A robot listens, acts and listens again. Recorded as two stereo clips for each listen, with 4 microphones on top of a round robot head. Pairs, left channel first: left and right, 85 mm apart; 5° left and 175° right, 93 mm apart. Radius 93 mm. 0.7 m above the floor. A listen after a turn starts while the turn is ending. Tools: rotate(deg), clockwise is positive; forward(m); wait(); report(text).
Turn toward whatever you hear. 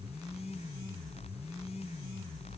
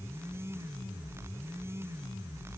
wait()
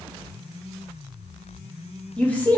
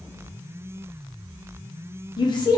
rotate(-25)
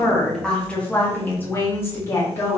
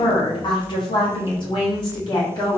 rotate(-40)
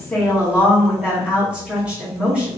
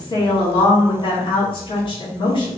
rotate(15)
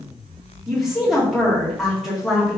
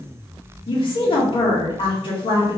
report("Found it: a woman speaking, straight ahead.")